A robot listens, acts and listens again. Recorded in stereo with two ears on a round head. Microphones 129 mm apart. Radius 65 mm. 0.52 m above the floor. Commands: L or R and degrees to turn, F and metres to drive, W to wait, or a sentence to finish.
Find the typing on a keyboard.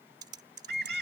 R30
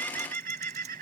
W
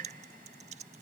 W
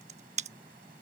R115
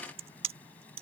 R45
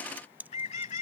R15
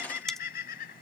W
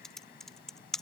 Facing the typing on a keyboard.